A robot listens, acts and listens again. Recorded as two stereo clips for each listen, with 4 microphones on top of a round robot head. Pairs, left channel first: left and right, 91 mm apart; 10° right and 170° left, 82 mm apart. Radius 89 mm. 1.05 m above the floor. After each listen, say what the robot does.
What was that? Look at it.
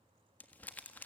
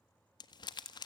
Turn 15° left.
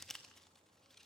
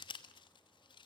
Found it: crumpling, straight ahead.